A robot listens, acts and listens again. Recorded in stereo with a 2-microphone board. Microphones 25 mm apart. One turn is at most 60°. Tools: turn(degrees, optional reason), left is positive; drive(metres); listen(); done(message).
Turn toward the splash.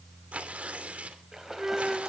turn(degrees=-20, reason="The splash: about 20° right or 160° right.")
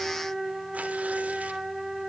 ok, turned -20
listen()
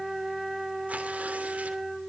done("I heard a splash, but can't make it out now. It was about straight ahead or 140° right.")